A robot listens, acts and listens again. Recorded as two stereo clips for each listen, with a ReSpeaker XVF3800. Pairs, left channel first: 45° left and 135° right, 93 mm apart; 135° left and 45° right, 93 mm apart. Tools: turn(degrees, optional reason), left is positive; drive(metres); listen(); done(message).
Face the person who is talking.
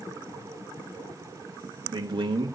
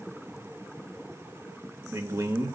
turn(degrees=-105, reason="The man speaking: 105° right.")
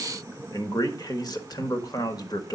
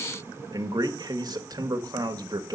done("Found it: a man speaking, straight ahead, 1 to 2 m away.")